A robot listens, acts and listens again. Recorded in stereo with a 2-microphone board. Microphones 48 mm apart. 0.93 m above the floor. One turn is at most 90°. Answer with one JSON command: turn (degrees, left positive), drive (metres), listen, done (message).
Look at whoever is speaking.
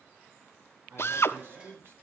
{"turn": -55}
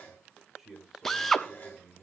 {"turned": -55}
{"done": "Facing the man speaking."}